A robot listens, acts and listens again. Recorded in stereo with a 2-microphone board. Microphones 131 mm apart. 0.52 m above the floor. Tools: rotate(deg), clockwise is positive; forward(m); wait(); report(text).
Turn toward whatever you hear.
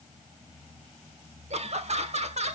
rotate(55)
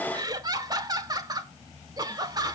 rotate(40)
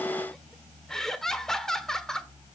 report("Found it: laughter, straight ahead, 1 to 2 m away.")